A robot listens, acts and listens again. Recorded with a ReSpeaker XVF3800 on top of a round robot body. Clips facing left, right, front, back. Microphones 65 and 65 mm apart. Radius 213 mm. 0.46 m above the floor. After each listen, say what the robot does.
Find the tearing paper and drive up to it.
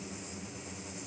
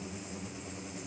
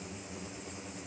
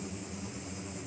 Keep listening.
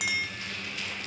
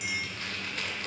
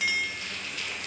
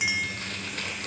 Turn 135° right.
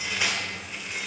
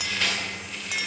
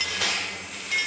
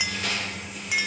Turn 15° left.
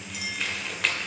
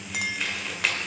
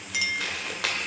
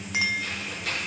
Drive 1.0 m forward.
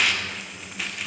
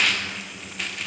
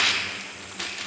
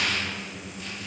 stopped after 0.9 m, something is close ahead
Arrived at the tearing paper, straight ahead.